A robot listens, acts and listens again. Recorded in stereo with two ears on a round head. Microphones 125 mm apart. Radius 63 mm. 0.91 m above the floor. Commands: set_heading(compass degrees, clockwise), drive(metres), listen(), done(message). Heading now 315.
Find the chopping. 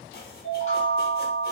listen()
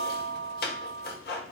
set_heading(245)
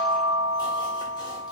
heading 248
listen()
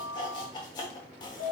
set_heading(218)
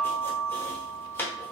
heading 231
set_heading(216)
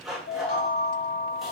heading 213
done("Facing the chopping.")